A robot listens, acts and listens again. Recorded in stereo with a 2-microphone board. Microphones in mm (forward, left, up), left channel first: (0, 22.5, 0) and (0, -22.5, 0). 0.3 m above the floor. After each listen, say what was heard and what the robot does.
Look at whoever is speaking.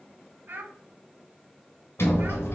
The child speaking: about 45° right or 135° right. Turn 45° right.
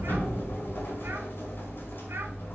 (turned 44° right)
Keep listening.
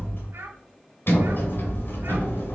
Keep listening.
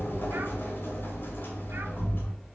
I heard a child speaking, but can't make it out now. It was about straight ahead or 90° right.